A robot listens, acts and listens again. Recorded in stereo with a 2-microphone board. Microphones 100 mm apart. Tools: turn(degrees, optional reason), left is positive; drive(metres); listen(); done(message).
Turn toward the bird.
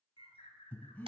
turn(degrees=90)
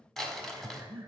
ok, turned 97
listen()
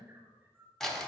turn(degrees=-20, reason="The bird is now 20° right.")
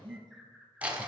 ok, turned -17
done("Facing the bird, 1 to 2 m away.")